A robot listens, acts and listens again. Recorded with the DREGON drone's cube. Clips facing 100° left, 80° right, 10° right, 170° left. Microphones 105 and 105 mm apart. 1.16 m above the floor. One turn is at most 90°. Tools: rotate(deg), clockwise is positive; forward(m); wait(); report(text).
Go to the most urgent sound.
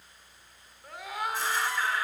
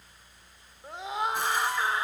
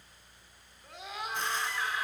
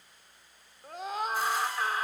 rotate(90)
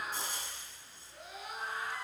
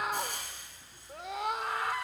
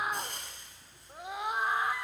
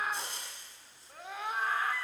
rotate(85)
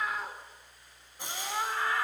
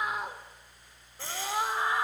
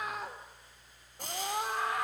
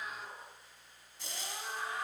rotate(10)
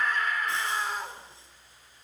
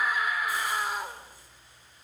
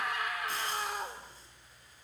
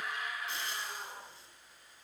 forward(1.0)
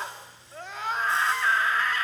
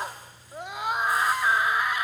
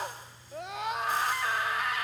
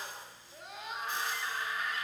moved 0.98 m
forward(1.0)
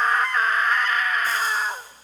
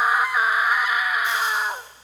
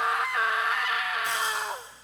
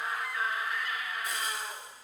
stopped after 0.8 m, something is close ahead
report("Arrived at the scream, straight ahead.")